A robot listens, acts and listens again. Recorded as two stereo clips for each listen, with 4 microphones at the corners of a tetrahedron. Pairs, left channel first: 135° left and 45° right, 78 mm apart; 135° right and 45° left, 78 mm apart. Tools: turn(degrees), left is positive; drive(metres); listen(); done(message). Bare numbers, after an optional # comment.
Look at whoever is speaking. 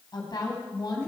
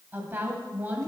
# The woman speaking: 110° left.
turn(110)
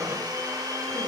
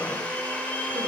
listen()
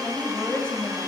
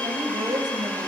# The woman speaking is now 60° left.
turn(60)
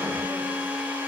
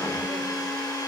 listen()
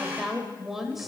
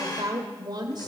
# The woman speaking is now 45° left.
turn(45)
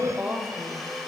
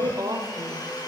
# The woman speaking is now 20° left.
turn(20)
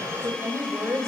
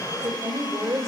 done("Found it: a woman speaking, straight ahead, 1 to 2 m away.")